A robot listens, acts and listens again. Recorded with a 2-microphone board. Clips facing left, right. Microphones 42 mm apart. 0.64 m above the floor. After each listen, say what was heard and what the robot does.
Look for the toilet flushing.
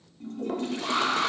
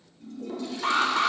The toilet flushing: about 45° left or 135° left. Turn 45° left.
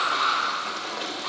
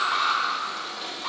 So it is at 90° left. Turn 90° left.
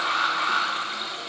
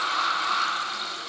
Keep listening.
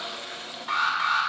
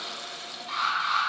The toilet flushing is now 30° left. Turn 30° left.
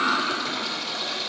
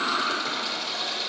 Facing the toilet flushing, under 1 m away.